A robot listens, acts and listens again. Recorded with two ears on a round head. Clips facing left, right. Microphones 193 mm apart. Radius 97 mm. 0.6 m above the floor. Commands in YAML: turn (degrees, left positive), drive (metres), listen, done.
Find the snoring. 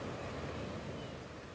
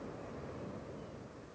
listen: true
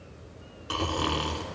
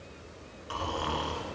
turn: 55
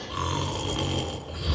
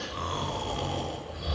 turn: 70
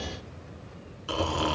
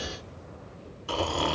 turn: 20
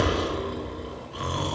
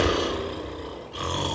done: "Found it: snoring, straight ahead."